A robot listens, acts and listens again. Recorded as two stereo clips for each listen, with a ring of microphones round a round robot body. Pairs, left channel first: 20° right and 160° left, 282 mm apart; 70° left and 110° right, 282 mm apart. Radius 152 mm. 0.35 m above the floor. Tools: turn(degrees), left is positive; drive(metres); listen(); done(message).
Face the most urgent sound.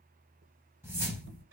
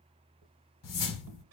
listen()
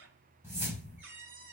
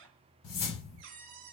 listen()
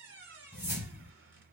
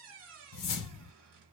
done("I can't make out anything urgent to turn to.")